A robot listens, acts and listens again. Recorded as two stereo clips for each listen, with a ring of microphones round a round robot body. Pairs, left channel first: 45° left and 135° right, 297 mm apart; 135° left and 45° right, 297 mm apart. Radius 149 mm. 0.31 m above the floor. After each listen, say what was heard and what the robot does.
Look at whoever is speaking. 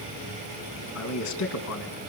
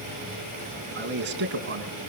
The man speaking: 10° left. Turn 10° left.
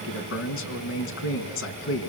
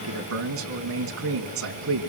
Found it: a man speaking, straight ahead, 2 to 4 m away.